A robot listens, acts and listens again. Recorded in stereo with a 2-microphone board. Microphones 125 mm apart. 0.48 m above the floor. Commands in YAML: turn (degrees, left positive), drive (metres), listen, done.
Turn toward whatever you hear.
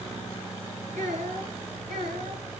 turn: -90
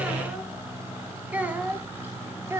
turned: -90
turn: -25
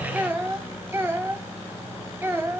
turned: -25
turn: -20
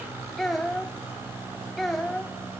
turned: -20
done: "Found it: a child speaking, straight ahead, 1 to 2 m away."